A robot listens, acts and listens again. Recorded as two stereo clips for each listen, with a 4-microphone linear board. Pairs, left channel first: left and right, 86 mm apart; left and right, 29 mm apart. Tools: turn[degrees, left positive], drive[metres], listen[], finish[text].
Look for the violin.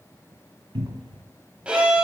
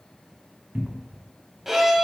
Action: turn[-30]
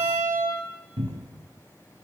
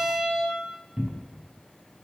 Thought: So it is at 135° right.
Action: turn[-135]
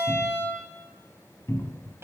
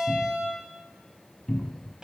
Thought: The violin is now 35° right.
Action: turn[-35]
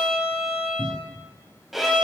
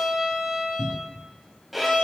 Action: finish[Facing the violin.]